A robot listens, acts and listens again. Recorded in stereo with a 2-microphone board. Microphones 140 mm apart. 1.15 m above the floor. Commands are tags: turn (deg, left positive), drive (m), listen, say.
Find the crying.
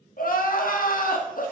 <turn deg="90"/>
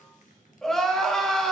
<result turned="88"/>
<say>Facing the crying.</say>